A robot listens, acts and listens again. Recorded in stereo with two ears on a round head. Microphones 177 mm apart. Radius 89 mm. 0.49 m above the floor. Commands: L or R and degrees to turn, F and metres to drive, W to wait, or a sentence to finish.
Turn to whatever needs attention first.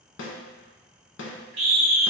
R35
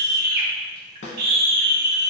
R105
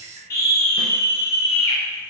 L15
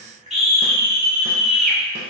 Facing the scream, 1 to 2 m away.